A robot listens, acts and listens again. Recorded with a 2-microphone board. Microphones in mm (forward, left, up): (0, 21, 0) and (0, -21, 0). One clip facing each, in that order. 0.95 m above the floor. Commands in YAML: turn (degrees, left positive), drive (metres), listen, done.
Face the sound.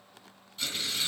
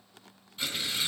turn: -30
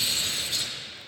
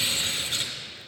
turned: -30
turn: -120
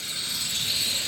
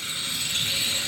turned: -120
turn: -50
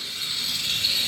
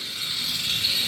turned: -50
done: "Facing the tearing paper."